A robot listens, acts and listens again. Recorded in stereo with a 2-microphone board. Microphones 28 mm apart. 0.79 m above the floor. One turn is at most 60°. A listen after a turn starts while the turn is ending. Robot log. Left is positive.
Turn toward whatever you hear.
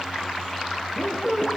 cmd yaw +30
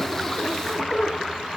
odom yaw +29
note: So it is at 140° left.
cmd yaw +60
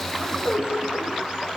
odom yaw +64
note: The squeak is now 80° left.
cmd yaw +60
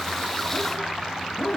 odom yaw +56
note: The squeak is now 20° left.
cmd yaw +20
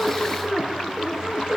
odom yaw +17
end: Facing the squeak.